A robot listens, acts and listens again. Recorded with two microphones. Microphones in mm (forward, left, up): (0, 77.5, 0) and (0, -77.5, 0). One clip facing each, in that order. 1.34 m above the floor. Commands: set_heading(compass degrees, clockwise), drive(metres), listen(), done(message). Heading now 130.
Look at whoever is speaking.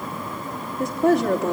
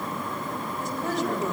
set_heading(70)
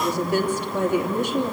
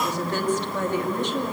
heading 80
set_heading(70)
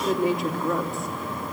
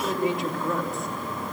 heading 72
done("Found it: a woman speaking, straight ahead.")